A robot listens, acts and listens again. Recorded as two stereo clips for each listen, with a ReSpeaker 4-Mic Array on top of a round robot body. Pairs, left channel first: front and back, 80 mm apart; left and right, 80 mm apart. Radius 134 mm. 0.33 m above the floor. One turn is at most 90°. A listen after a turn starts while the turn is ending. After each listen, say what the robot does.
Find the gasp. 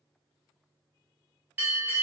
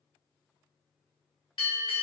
Keep listening.
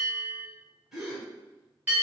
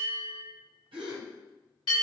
Turn 90° right.
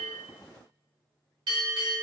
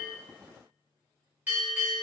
Facing where the gasp came from. I can't hear it now.